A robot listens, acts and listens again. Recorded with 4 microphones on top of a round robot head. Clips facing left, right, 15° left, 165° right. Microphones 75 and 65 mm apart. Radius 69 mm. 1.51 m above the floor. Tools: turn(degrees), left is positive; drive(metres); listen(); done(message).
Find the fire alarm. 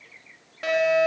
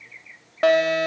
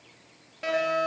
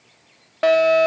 turn(degrees=-135)
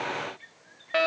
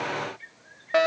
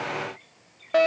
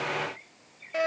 turn(degrees=-20)
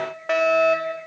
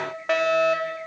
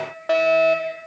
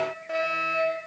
done("Facing the fire alarm.")